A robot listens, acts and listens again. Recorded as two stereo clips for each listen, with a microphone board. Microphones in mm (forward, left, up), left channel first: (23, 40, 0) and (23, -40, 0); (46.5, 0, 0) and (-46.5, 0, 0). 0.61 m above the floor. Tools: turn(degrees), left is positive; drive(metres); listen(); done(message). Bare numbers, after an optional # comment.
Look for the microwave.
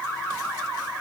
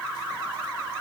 listen()
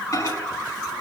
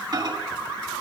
# The microwave: 140° left.
turn(140)
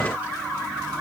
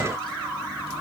# The microwave is now 20° right.
turn(-20)
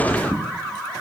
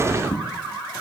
done("Found it: a microwave, straight ahead.")